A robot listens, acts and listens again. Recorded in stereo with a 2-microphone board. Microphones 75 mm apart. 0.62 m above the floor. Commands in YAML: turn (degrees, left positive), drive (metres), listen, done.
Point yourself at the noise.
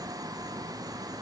listen: true
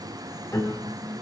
turn: 55
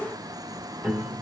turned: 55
done: "Facing the piano, 2 to 4 m away."